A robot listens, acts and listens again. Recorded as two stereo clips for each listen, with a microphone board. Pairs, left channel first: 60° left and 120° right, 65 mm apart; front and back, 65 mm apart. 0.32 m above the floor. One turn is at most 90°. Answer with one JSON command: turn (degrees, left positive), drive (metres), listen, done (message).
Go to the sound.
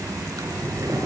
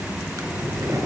{"turn": -90}
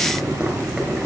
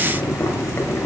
{"turn": -55}
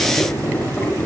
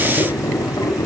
{"turn": -10}
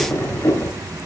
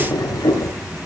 {"drive": 1.0}
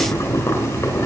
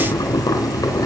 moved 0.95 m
{"drive": 1.0}
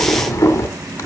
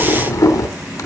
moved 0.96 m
{"turn": 15}
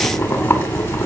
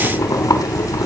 {"drive": 1.0}
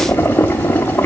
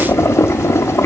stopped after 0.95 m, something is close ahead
{"turn": 10}
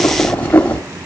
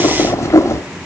{"done": "I am next to the boiling."}